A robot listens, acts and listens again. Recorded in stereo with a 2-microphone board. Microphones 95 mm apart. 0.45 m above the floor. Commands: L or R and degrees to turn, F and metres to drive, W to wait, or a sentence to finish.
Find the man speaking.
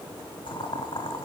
W
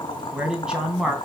R30
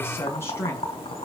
L30
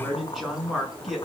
Found it: a man speaking, straight ahead, over 4 m away.